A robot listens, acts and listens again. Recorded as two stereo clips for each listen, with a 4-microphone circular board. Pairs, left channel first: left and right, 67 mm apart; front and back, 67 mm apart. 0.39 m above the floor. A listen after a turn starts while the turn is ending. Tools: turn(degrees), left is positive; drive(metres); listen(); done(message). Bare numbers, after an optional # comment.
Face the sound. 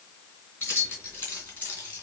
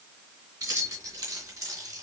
# The keys jangling: 150° left.
turn(150)
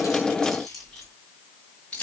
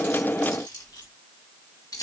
# The keys jangling is now 20° left.
turn(20)
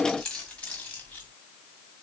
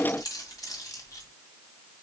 # The keys jangling is now 25° left.
turn(25)
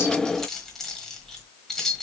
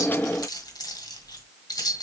done("Facing the keys jangling, 1 to 2 m away.")